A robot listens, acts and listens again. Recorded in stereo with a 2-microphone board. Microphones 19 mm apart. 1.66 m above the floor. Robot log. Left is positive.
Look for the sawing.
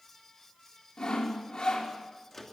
note: The sawing: about 50° left or 130° left.
cmd yaw +50
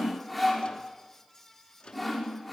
end: Facing the sawing, over 4 m away.